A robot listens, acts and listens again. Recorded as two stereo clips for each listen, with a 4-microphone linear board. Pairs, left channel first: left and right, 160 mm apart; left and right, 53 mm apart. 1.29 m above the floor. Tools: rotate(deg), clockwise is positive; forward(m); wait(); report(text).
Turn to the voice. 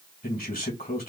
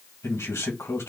rotate(-70)
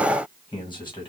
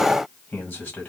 rotate(-30)
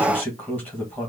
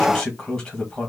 rotate(-10)
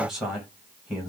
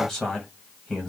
report("Found it: a man speaking, straight ahead, 1 to 2 m away.")